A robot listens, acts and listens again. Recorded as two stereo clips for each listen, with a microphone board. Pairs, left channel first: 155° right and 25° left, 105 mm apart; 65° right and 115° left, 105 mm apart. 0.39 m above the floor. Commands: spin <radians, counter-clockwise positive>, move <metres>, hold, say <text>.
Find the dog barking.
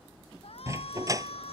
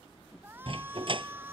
spin 1.40
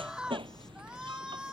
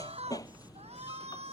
spin -0.26
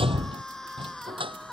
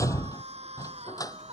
spin -0.17
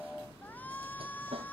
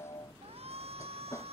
say Facing the dog barking.